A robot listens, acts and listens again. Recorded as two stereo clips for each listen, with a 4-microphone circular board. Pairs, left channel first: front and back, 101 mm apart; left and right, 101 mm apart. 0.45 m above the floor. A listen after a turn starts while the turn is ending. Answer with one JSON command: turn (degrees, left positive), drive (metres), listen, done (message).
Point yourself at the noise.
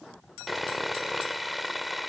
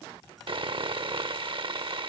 {"turn": -90}
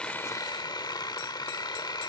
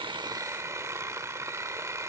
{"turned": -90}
{"turn": -35}
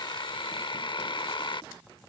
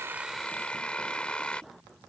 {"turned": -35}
{"turn": 10}
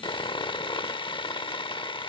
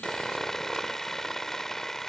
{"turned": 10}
{"done": "Found it: sawing, straight ahead."}